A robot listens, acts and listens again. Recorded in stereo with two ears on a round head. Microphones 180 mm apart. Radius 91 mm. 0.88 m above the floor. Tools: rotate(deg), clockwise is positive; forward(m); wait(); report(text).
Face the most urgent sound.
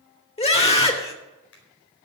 rotate(-30)
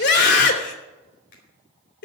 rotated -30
rotate(-115)
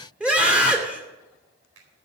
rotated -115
report("Found it: a scream, straight ahead.")